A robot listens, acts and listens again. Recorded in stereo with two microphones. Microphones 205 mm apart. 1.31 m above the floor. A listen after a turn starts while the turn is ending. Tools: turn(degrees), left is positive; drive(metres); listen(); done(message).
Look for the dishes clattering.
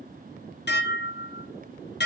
turn(degrees=60)
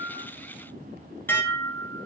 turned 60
turn(degrees=10)
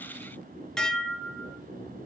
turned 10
done("Found it: dishes clattering, straight ahead, under 1 m away.")